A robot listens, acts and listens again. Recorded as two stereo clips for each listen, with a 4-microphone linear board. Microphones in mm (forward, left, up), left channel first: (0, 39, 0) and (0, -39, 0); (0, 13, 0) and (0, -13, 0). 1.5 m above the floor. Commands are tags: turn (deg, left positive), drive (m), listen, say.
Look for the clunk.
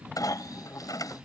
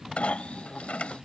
<turn deg="50"/>
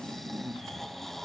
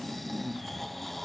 <listen/>
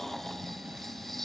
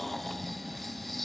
<say>I heard a clunk, but can't make it out now. It was about straight ahead or 80° left.</say>